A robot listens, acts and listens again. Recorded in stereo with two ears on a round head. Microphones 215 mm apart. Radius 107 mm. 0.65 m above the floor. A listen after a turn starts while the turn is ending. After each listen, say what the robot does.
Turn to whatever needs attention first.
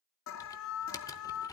Turn 60° left.
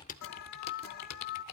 Turn 50° left.
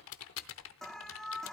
Facing the alarm.